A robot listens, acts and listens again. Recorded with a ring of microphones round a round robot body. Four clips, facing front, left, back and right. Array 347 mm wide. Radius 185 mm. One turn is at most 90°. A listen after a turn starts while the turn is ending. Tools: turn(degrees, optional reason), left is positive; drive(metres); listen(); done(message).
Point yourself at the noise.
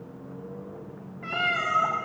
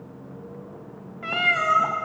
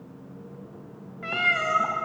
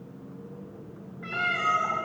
turn(degrees=90, reason="The cat meowing: 120° left.")
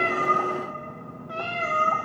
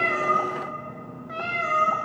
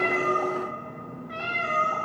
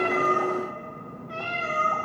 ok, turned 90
turn(degrees=40, reason="The cat meowing is now 40° left.")
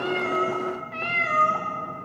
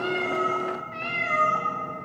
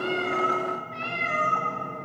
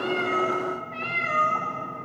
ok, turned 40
done("Found it: a cat meowing, straight ahead, over 4 m away.")